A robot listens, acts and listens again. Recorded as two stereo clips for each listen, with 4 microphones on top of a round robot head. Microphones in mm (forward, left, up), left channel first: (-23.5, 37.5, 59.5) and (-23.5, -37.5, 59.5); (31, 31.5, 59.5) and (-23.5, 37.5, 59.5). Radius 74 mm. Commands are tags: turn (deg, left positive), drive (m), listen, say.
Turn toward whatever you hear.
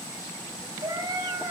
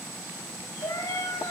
<turn deg="-40"/>
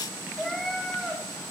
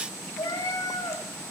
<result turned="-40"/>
<say>Facing the cat meowing.</say>